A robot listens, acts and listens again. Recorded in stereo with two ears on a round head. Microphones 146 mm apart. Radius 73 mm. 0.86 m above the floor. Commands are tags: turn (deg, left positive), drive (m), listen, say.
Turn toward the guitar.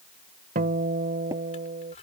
<turn deg="-50"/>
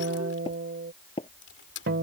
<turn deg="-75"/>
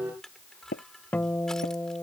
<turn deg="10"/>
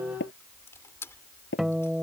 <say>Found it: a guitar, straight ahead.</say>